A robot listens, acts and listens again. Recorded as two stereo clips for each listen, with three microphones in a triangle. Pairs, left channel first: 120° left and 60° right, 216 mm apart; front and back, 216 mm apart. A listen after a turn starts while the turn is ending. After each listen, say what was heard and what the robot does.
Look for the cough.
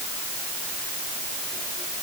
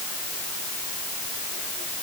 Keep listening.
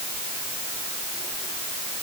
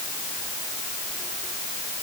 Keep listening.
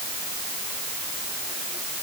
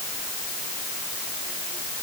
I can't make out a cough to turn to.